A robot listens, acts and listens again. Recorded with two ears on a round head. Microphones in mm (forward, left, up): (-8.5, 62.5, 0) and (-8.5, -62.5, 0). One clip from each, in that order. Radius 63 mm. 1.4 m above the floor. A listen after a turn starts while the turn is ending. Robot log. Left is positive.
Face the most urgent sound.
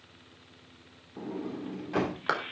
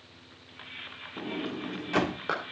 cmd idle
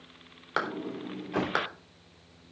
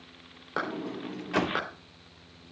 cmd idle
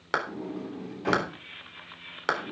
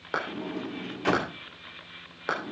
end: I can't make out anything urgent, only a clap and a sliding door.